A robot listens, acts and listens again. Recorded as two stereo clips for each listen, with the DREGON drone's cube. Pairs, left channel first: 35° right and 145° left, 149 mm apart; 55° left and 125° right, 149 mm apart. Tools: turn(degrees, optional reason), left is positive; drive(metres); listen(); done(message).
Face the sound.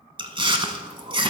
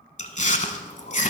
turn(degrees=90, reason="The chewing: 90° left.")
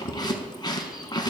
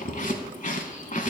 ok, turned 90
turn(degrees=30, reason="The chewing is now 30° left.")
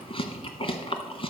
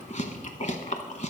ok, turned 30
turn(degrees=20, reason="The chewing is now 20° left.")
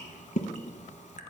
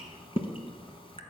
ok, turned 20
done("Found it: chewing, straight ahead, under 1 m away.")